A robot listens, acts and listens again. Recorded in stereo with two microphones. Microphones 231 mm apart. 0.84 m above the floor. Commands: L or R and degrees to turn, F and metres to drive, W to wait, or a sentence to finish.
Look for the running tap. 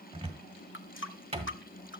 L60
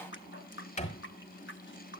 L60
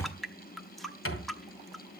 Found it: a running tap, straight ahead.